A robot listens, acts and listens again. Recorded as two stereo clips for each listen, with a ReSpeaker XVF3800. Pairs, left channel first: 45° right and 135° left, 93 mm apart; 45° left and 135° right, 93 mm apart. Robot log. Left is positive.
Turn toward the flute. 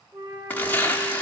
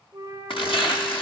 note: The flute: 165° left.
cmd yaw +165
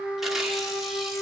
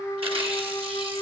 end: Facing the flute.